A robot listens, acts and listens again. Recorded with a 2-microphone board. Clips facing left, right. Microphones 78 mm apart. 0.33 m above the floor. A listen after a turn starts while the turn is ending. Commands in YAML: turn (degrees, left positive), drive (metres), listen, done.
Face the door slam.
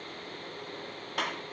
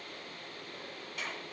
listen: true
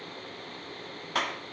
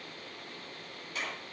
listen: true
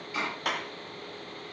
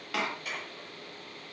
turn: -70
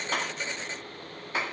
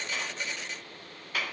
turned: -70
listen: true
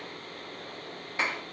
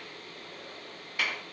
done: "I heard a door slam, but can't make it out now. It was about straight ahead or 40° right."